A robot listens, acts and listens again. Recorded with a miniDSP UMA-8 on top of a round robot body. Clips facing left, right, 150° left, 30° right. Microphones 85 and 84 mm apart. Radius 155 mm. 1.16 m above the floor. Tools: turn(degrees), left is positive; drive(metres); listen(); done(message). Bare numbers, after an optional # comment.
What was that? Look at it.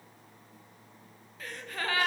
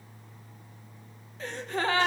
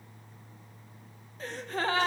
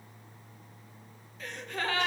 # The gasp: 155° right.
turn(-155)
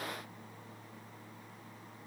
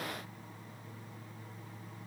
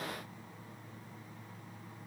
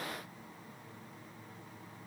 done("Facing where the gasp came from. I can't hear it now.")